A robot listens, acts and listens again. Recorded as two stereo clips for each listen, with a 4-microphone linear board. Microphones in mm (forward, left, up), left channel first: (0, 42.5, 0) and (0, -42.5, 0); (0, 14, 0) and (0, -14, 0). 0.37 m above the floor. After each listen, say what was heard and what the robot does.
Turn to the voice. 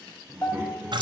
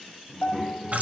The child speaking: about 20° right or 160° right. Turn 20° right.
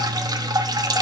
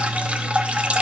Keep listening.
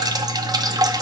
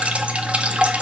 Keep listening.
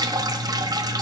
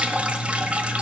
I heard a child speaking, but can't make it out now. It was about straight ahead or 140° right.